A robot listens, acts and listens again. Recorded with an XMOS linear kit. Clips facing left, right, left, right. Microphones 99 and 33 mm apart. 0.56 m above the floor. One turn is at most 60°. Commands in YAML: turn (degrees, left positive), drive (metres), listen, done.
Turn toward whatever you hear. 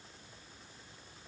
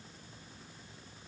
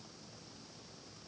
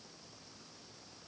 listen: true
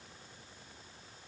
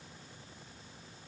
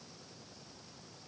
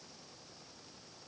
listen: true
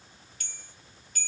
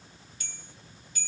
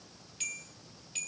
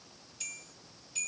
turn: 55
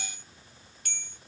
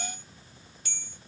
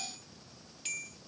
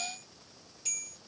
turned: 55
turn: 60
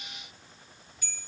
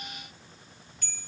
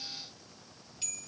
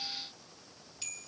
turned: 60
turn: 10
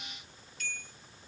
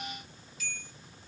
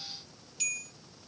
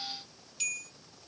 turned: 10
done: "Facing the bell."